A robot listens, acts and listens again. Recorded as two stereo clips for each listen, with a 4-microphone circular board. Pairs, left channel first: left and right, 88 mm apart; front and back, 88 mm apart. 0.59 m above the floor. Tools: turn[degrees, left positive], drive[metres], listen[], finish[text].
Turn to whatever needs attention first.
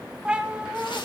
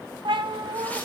Action: listen[]
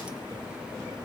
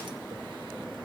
Action: listen[]
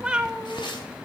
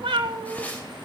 Action: finish[I can't make out anything urgent to turn to.]